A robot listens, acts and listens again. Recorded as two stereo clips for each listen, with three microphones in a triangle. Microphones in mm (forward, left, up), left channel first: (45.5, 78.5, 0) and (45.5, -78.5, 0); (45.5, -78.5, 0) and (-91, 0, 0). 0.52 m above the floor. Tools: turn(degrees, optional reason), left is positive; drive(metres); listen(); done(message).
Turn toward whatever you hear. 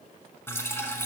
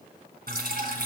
turn(degrees=165, reason="The dripping: 165° left.")
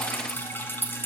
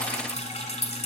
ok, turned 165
turn(degrees=15, reason="The dripping is now 15° left.")
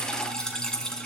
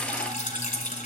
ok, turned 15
done("Found it: dripping, straight ahead, 1 to 2 m away.")